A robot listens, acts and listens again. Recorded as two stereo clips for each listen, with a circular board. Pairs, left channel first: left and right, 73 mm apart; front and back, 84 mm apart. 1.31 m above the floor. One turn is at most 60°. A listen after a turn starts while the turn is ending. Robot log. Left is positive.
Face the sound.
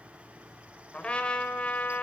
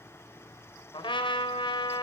note: The trumpet: 15° left.
cmd yaw +15
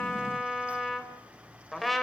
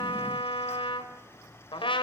end: Facing the trumpet, 2 to 4 m away.